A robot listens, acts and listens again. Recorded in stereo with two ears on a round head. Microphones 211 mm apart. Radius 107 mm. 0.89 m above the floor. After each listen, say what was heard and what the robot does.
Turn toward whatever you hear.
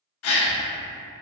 The gasp: about 70° left or 110° left. Turn 70° left.
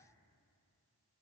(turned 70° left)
Keep listening.
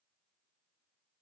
I heard a gasp, but can't make it out now. It was about straight ahead or 40° left.